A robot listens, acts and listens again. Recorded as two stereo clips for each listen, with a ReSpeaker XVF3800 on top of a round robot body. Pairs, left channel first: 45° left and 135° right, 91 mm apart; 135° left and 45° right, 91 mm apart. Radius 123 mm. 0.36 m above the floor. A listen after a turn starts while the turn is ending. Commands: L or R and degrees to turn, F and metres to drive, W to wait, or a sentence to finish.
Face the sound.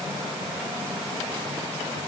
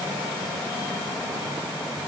W
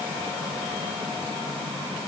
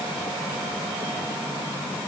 W
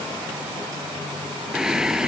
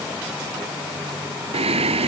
R50
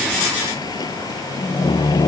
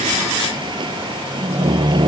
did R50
Found it: singing, straight ahead.